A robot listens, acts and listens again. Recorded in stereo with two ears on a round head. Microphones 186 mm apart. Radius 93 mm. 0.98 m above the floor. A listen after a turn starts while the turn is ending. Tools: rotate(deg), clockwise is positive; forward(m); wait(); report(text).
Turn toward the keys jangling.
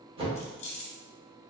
rotate(-35)
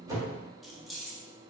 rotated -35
report("Facing the keys jangling.")